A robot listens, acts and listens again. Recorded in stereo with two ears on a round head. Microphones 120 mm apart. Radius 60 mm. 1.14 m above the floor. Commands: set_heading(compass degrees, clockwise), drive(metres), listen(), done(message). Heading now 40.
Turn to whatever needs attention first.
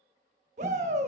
set_heading(90)
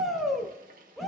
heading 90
done("Facing the shout, 1 to 2 m away.")